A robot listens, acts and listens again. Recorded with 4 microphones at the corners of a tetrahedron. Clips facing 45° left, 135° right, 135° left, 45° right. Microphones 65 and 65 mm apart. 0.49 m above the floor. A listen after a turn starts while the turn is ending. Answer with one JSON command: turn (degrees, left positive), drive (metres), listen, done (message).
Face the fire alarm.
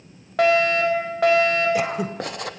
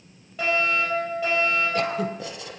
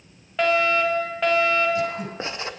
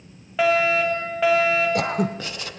{"turn": 40}
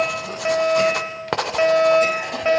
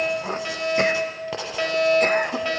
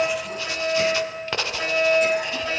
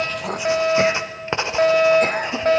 {"turn": -15}
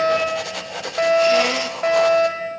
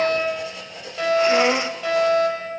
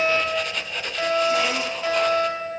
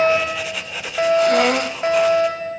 {"done": "Facing the fire alarm, over 4 m away."}